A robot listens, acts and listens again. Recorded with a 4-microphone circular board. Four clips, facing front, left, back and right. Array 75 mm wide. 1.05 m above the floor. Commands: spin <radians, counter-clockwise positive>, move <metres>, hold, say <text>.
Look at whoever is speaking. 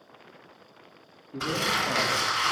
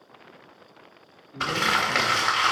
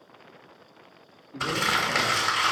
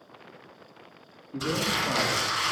spin -0.79
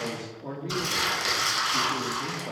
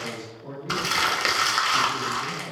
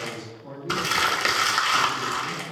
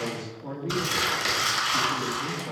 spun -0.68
say Found it: a man speaking, straight ahead, 2 to 4 m away.